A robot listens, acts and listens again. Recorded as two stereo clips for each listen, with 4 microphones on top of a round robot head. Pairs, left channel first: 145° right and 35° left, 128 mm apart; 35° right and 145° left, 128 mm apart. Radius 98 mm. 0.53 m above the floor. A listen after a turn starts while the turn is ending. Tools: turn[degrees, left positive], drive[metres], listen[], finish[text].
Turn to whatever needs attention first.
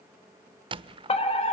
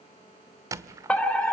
Thought: The fire alarm: 115° right.
Action: turn[-115]
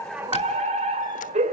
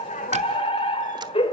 Thought: The fire alarm is now 10° left.
Action: turn[10]
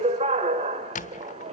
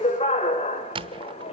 Action: finish[Found it: a fire alarm, straight ahead, over 4 m away.]